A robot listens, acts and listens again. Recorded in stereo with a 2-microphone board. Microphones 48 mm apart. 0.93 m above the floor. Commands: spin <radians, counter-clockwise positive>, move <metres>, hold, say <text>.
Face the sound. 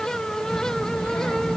spin 1.05
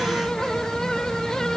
say Found it: a child speaking, straight ahead.